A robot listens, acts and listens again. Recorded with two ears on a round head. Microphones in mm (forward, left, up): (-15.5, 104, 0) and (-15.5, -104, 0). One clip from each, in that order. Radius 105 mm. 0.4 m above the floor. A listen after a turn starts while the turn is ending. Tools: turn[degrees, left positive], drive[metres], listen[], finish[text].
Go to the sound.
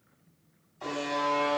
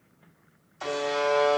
Thought: The buzzer: about 60° right or 120° right.
Action: turn[-60]
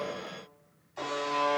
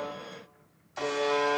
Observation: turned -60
Thought: So it is at 50° right.
Action: turn[-50]
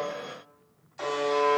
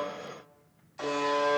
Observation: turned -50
Action: drive[1.0]
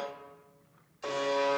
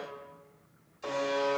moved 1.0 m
Thought: The buzzer is now 10° left.
Action: turn[10]
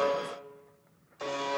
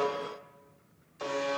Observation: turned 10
Action: drive[1.0]
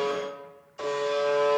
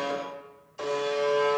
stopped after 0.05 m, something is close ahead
Action: finish[I am next to the buzzer.]